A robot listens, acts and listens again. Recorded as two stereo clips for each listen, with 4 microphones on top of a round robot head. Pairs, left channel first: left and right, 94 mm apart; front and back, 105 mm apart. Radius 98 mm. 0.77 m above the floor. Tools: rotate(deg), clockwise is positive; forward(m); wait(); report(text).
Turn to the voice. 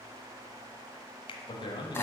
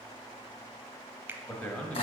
rotate(-75)
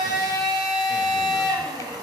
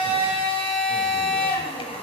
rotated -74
wait()
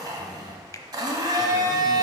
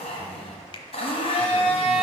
wait()
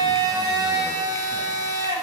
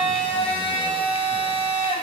report("Facing where the man speaking came from. I can't hear it now.")